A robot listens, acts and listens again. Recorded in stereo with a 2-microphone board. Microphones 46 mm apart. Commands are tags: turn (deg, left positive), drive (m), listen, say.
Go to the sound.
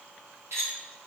<turn deg="-70"/>
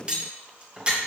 <turn deg="-25"/>
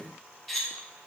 <drive m="1.0"/>
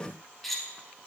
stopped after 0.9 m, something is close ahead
<say>Arrived at the cutlery clinking, straight ahead.</say>